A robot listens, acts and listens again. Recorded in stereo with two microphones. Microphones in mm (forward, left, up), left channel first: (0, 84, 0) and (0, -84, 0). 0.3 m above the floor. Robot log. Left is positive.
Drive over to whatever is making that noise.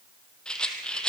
cmd yaw +30
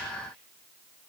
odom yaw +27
cmd idle
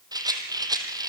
note: So it is at 25° right.
cmd yaw -25
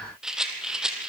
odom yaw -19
cmd fwd 1.0
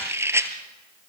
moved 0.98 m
note: The rattle is now 15° right.
cmd yaw -15
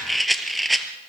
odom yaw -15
cmd fwd 1.0
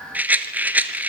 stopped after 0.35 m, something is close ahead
note: The rattle is now 10° right.
cmd yaw -10
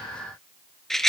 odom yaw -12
end: I am next to the rattle.